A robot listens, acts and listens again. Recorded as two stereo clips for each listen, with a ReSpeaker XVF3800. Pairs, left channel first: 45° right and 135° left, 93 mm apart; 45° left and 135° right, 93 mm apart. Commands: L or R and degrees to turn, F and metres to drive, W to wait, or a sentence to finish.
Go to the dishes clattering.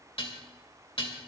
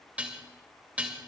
R60
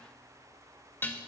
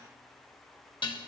L20
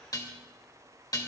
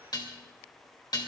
F1.0
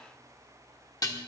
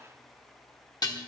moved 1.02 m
F1.0
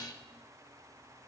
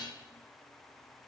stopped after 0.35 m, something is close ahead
I am next to the dishes clattering.